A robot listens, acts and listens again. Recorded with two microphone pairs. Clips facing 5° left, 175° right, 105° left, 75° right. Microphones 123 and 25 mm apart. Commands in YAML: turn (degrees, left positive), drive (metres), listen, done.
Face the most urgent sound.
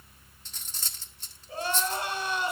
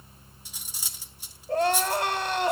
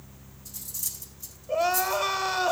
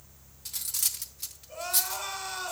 turn: 170
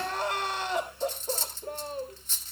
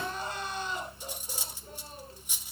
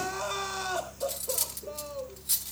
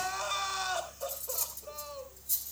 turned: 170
turn: 10
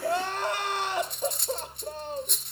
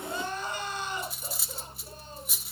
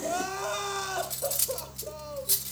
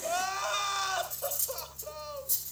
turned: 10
done: "Found it: crying, straight ahead, 2 to 4 m away."